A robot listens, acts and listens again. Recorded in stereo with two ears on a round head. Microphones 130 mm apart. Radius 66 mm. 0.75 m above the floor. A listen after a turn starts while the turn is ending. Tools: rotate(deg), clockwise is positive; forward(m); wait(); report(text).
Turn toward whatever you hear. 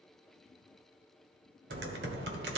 rotate(90)
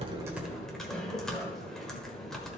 report("Found it: typing on a keyboard, straight ahead.")